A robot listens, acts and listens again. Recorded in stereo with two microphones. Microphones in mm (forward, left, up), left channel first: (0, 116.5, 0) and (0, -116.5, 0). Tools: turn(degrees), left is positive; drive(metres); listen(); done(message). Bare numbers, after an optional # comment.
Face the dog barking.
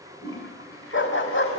# The dog barking: about 50° left or 130° left.
turn(50)
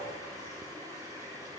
listen()
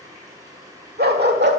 # So it is at 50° right.
turn(-50)
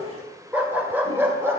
# The dog barking is now 10° right.
turn(-10)
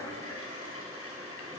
listen()
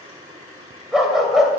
done("Found it: a dog barking, straight ahead.")